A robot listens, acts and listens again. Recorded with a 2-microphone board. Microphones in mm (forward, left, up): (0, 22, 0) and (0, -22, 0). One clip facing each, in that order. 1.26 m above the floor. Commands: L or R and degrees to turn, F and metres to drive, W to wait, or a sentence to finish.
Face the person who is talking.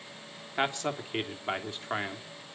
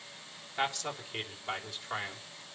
L25
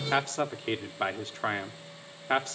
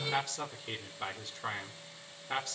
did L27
L125
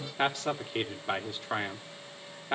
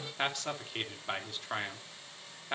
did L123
Found it: a man speaking, straight ahead, 2 to 4 m away.